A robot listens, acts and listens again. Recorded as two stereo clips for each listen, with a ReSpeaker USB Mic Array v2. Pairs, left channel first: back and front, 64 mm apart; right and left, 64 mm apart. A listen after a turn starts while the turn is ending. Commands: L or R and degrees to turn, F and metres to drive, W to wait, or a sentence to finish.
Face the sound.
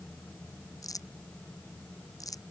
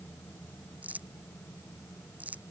L155
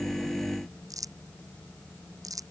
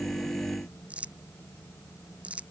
L20
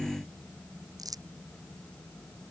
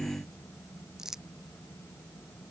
L10
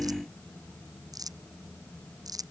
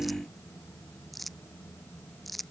Found it: crumpling, straight ahead.